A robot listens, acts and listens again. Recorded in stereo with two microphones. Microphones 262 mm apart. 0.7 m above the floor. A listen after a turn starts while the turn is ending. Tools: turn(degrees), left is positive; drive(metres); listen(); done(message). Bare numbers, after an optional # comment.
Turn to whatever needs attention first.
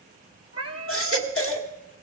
# The baby crying: about 55° left or 125° left.
turn(55)
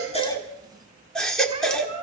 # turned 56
done("Found it: a baby crying, straight ahead.")